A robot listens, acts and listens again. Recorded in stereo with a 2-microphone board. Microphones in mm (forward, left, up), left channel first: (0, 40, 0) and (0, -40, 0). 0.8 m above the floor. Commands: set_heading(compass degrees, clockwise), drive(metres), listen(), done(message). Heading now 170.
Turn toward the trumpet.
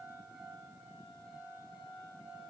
listen()
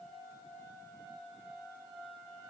listen()
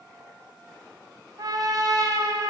set_heading(225)
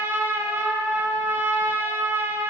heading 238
set_heading(268)
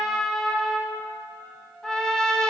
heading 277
done("Facing the trumpet, 1 to 2 m away.")